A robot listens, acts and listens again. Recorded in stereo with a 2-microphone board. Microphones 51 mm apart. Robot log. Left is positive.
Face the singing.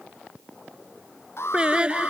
note: The singing: about 20° right or 160° right.
cmd yaw -20
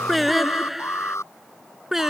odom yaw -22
cmd yaw -30
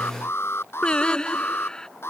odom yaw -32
note: So it is at 20° left.
cmd yaw +20
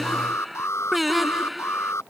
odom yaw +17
end: Facing the singing.